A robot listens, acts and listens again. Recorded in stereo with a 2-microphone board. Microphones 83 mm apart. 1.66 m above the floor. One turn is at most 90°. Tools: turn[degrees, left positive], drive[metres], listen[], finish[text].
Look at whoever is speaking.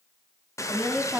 Action: turn[-30]
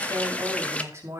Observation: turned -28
Thought: So it is at 145° right.
Action: turn[-90]
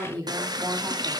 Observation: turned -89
Thought: The woman speaking is now 55° right.
Action: turn[-55]
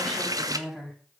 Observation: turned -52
Action: finish[Found it: a woman speaking, straight ahead.]